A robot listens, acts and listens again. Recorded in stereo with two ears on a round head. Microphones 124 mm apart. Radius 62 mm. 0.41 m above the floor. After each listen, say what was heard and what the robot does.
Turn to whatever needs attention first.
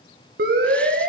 Turn 90° right.
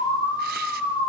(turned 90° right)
So it is at 10° left. Turn 10° left.
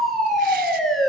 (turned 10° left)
Found it: a siren, straight ahead, over 4 m away.